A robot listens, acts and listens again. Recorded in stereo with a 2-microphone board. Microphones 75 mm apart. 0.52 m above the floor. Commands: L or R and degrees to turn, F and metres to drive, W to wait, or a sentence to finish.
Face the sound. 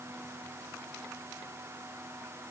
W
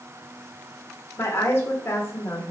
L35
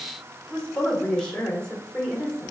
L10
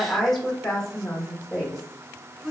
Facing the woman speaking.